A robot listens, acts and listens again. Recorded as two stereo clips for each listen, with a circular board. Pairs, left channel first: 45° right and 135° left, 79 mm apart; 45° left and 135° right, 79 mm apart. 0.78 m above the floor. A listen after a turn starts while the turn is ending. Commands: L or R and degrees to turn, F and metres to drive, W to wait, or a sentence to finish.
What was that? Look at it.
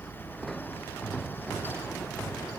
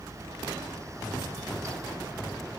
W
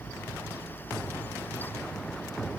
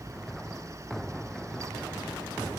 W
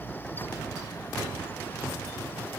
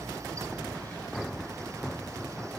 I can't make out anything.